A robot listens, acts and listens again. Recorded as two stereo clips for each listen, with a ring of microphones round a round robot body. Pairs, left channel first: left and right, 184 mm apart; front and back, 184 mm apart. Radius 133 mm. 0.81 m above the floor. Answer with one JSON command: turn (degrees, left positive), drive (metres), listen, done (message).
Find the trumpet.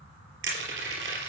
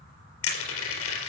{"listen": true}
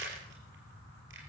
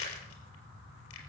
{"listen": true}
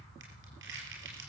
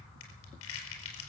{"done": "I can't make out a trumpet, only crushing."}